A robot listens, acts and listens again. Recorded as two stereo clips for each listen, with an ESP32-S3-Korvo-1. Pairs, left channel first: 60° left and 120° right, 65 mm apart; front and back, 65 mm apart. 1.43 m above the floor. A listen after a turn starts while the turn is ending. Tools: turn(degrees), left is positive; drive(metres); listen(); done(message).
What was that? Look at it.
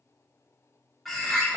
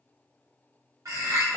turn(degrees=150)
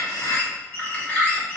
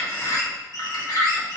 done("Facing the bird.")